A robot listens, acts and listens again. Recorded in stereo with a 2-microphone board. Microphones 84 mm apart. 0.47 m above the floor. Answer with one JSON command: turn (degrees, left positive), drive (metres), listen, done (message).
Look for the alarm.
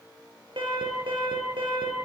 {"turn": -90}
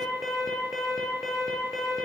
{"done": "Found it: an alarm, straight ahead, over 4 m away."}